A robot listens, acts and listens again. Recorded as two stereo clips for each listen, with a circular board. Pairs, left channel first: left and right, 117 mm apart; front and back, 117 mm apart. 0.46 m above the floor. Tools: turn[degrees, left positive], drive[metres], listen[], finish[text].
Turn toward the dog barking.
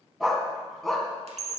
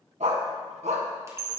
Thought: The dog barking: 175° left.
Action: turn[175]
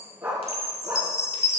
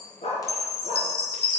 Thought: The dog barking is now 20° right.
Action: turn[-20]
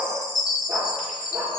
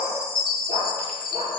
Action: finish[Found it: a dog barking, straight ahead, 2 to 4 m away.]